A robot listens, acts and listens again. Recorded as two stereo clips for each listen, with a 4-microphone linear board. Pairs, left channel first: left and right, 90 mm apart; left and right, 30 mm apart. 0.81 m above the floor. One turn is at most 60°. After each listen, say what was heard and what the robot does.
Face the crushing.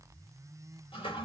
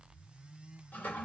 Keep listening.
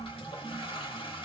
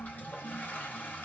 Keep listening.
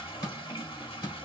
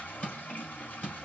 The crushing: about 50° left or 130° left. Turn 50° left.
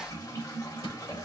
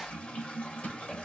Keep listening.
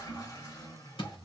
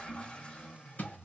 So it is at 80° left. Turn 60° left.
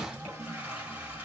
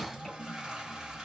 Nothing new. It was at 20° left. Turn 20° left.
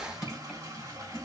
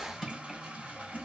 The crushing is now 10° right. Turn 10° right.
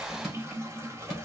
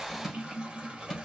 Found it: crushing, straight ahead, 2 to 4 m away.